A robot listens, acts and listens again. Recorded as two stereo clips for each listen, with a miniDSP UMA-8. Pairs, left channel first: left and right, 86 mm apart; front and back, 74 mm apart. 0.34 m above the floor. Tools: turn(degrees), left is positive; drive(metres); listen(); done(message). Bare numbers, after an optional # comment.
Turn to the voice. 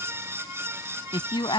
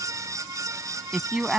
# The woman speaking: 100° left.
turn(100)
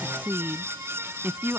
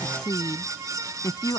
# The woman speaking is now 25° right.
turn(-25)
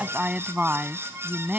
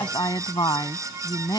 # The woman speaking is now 15° right.
turn(-15)
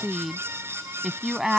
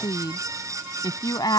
done("Found it: a woman speaking, straight ahead.")